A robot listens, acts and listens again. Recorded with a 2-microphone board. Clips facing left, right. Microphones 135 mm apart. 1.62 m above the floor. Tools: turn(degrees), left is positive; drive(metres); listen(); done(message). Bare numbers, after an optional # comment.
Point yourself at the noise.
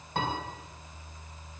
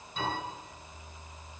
# The piano: about 70° left or 110° left.
turn(70)
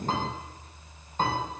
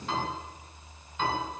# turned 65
# So it is at 45° left.
turn(45)
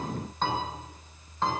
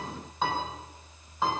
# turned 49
done("Facing the piano, over 4 m away.")